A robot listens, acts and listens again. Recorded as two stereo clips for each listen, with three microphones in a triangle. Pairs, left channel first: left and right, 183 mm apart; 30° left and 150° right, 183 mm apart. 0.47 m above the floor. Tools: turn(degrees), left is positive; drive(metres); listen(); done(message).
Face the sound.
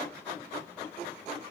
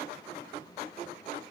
listen()
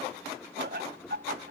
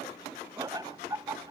turn(degrees=-80)
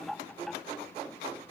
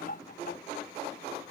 done("Found it: laughter, straight ahead.")